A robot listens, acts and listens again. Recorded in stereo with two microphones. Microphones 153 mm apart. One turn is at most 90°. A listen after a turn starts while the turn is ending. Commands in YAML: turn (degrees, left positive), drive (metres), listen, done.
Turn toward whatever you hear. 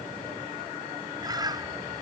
turn: -25
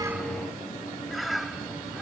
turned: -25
done: "Found it: a bird, straight ahead."